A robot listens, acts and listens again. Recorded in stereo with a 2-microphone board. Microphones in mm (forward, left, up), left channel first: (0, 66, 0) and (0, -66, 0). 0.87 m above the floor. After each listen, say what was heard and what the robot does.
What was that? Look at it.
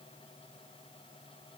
Keep listening.
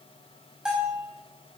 Turn 30° right.
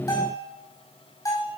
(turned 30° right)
So it is at 25° left. Turn 25° left.
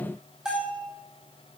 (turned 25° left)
Facing the bell, over 4 m away.